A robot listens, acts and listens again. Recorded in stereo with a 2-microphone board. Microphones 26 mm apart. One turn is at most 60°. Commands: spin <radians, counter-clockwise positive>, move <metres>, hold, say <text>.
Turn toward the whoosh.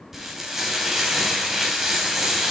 hold
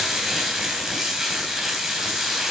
hold
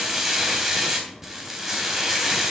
say I can't make out a whoosh to turn to.